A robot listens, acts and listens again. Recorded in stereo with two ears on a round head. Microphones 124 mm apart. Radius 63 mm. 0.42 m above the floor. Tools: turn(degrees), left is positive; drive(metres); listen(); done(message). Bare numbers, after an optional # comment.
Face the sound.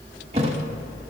# The thud: about 40° right or 140° right.
turn(-40)
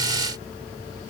listen()
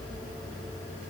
done("I heard a thud, but can't make it out now. It was about straight ahead or 100° right.")